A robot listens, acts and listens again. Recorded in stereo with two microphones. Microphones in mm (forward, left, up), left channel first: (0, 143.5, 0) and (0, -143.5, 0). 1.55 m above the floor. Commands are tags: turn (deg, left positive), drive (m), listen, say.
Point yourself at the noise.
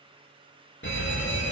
<turn deg="40"/>
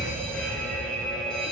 <say>Facing the fire alarm.</say>